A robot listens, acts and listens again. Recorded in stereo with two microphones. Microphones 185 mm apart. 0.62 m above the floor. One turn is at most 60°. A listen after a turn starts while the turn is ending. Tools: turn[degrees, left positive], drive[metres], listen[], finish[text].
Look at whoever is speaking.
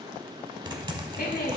Thought: The woman speaking: about 55° left or 125° left.
Action: turn[55]
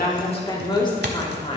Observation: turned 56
Thought: So it is at 30° left.
Action: turn[30]
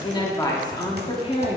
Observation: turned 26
Thought: The woman speaking is now 35° left.
Action: turn[35]
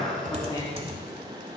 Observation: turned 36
Thought: The woman speaking is now 25° left.
Action: turn[25]
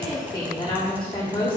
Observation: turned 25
Thought: The woman speaking is now 25° left.
Action: turn[25]
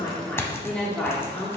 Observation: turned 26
Action: finish[Facing the woman speaking.]